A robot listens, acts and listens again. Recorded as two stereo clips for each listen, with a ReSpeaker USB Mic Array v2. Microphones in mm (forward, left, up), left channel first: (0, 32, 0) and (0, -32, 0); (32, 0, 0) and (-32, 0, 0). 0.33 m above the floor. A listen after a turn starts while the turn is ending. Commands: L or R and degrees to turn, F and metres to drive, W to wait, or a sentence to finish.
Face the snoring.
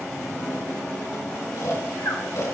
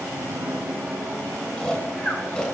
L70
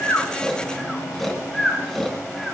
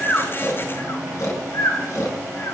Found it: snoring, straight ahead, 2 to 4 m away.